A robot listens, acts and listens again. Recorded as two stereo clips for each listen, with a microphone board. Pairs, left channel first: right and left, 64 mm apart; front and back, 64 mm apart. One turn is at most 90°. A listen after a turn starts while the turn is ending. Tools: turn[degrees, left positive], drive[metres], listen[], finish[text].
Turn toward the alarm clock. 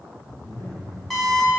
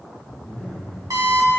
Thought: The alarm clock: 175° right.
Action: turn[-90]
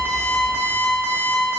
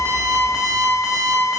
Thought: The alarm clock is now 90° right.
Action: turn[-90]
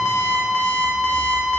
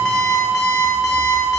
Thought: The alarm clock is now 20° right.
Action: turn[-20]
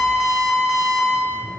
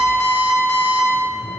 Action: finish[Facing the alarm clock, 1 to 2 m away.]